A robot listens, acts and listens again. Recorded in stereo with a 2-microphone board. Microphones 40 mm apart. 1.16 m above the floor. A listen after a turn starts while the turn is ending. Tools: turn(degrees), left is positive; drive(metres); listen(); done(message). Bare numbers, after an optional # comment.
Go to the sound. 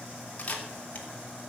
# The camera shutter: about 40° left or 140° left.
turn(40)
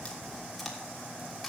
listen()
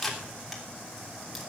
drive(1.0)
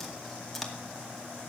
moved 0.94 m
drive(1.0)
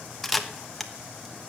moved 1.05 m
drive(1.0)
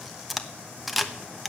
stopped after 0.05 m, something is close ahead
done("I am next to the camera shutter.")